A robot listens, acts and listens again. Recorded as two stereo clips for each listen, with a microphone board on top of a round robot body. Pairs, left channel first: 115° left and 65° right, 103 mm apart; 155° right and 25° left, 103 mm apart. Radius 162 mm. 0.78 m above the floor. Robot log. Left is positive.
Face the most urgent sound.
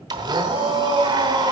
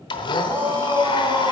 note: The shout: 50° right.
cmd yaw -50
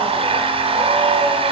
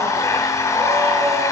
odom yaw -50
cmd idle
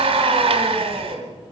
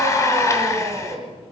note: The shout is now 30° right.
cmd yaw -30
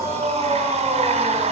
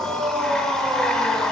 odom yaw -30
end: Found it: a shout, straight ahead, over 4 m away.